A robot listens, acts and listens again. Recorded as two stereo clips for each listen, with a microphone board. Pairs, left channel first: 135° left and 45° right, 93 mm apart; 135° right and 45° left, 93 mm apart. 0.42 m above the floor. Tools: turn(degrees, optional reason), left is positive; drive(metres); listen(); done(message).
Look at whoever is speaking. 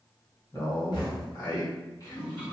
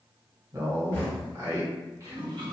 turn(degrees=95, reason="The man speaking: 95° left.")
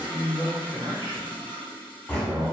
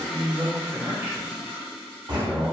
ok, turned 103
turn(degrees=-10, reason="The man speaking is now 10° right.")
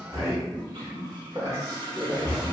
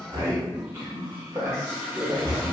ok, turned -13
done("Facing the man speaking.")